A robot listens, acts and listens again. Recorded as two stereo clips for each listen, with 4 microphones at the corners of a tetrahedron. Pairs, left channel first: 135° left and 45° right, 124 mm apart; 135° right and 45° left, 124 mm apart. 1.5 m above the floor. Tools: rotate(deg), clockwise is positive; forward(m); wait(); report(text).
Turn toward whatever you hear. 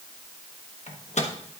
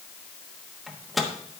rotate(-135)
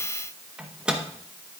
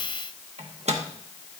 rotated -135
rotate(-35)
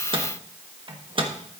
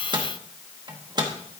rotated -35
report("Found it: a microwave, straight ahead, 1 to 2 m away.")